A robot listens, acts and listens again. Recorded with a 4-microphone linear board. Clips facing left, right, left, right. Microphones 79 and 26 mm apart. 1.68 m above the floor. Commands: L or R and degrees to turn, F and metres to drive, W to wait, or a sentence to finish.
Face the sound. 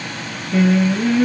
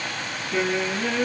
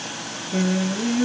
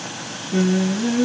R30
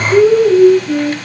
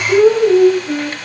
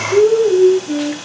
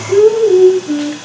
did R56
R140
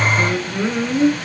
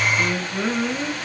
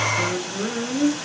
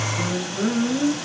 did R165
L10
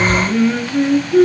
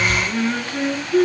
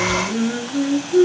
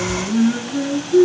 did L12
Facing the singing.